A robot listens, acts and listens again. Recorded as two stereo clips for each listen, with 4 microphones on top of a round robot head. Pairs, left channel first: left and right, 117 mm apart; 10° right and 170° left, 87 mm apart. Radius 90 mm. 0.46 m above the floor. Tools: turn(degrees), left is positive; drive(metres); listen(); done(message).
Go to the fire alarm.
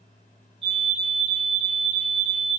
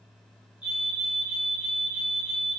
turn(degrees=-110)
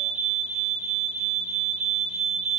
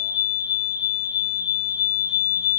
turn(degrees=-10)
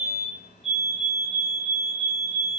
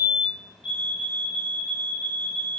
drive(metres=1.0)
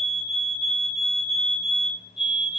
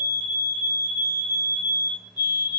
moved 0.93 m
drive(metres=1.0)
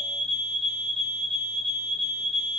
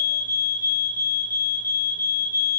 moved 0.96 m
drive(metres=1.0)
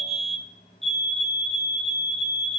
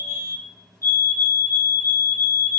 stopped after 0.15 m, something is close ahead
done("I am next to the fire alarm.")